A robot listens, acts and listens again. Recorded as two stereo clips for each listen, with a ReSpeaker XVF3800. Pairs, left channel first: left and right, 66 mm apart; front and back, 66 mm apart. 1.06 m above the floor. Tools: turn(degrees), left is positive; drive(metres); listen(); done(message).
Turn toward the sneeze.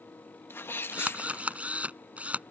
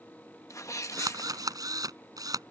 turn(degrees=35)
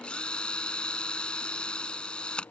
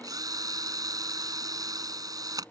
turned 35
done("I heard a sneeze from this way, but can't make it out now.")